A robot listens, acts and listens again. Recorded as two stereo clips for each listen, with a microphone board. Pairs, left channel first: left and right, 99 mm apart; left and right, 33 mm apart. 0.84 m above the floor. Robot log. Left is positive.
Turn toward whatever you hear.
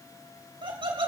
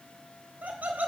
note: The laughter: about 60° right or 120° right.
cmd yaw -60
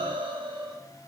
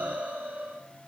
note: So it is at 55° right.
cmd yaw -55
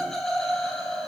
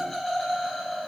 end: Found it: laughter, straight ahead.